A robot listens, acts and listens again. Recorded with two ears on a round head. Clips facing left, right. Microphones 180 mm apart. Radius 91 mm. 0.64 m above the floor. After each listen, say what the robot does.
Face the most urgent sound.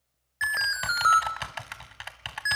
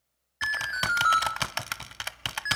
Turn 45° left.
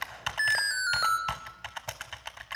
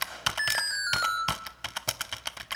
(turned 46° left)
Facing the alarm, 2 to 4 m away.